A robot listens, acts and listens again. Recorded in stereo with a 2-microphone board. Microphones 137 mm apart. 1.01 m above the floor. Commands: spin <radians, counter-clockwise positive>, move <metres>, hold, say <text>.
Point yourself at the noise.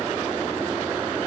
hold
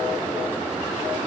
hold
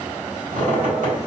spin -1.22
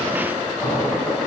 say Found it: a squeak, straight ahead.